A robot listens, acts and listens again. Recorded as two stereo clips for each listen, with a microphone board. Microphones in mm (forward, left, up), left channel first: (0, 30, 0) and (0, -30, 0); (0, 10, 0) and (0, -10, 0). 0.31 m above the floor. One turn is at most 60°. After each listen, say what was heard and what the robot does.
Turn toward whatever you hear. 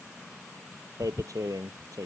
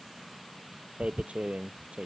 Turn 60° right.
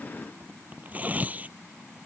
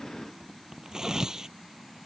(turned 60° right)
So it is at 30° right. Turn 30° right.
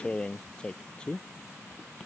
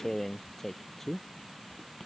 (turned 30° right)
The tearing paper is now 15° left. Turn 15° left.
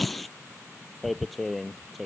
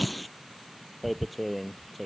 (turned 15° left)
Found it: tearing paper, straight ahead.